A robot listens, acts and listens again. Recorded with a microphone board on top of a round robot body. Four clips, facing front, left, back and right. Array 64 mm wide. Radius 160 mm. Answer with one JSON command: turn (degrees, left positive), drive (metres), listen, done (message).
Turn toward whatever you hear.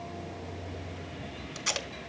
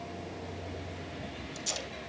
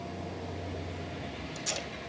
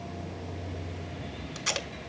{"turn": -55}
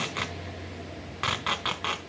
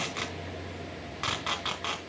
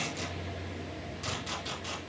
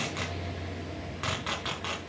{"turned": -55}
{"done": "Found it: tape being pulled, straight ahead."}